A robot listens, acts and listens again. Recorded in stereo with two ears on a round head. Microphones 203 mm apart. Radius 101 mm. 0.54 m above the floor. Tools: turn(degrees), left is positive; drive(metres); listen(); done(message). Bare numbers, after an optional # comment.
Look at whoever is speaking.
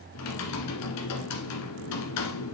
listen()
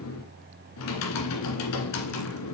listen()
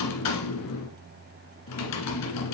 done("I can't make out anyone speaking to turn to.")